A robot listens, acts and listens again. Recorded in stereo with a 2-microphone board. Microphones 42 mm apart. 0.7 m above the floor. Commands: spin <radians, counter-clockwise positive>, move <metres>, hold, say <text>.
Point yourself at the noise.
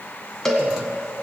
spin 0.52
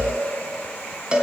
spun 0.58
spin -0.44
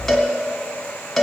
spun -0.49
say Facing the cowbell.